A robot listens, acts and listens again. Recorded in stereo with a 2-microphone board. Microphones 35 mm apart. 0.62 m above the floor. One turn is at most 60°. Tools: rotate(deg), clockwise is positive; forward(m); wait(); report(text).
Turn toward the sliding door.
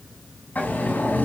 rotate(-50)
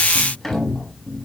report("Facing the sliding door, 2 to 4 m away.")